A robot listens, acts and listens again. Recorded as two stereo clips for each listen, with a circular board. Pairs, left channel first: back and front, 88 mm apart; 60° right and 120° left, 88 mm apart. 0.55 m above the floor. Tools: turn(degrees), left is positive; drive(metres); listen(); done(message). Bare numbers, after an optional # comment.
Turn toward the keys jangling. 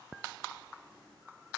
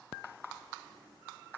listen()
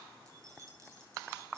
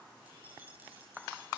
# The keys jangling: 50° left.
turn(50)
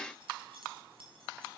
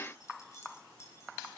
done("Found it: keys jangling, straight ahead, over 4 m away.")